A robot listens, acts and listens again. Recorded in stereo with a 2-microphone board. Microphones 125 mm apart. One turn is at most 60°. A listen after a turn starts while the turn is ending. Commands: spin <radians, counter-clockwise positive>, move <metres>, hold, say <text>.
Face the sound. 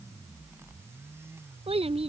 spin -1.05
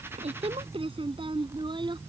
spin -0.70
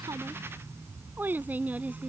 spin -0.17
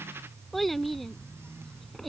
say Found it: a child speaking, straight ahead.